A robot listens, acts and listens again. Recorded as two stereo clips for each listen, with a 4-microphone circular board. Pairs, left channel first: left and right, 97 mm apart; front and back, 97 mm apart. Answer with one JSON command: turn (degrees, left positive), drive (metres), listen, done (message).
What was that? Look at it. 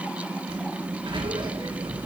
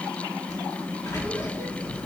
{"turn": -60}
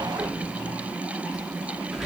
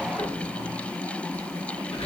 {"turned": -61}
{"done": "Facing the sliding door, 2 to 4 m away."}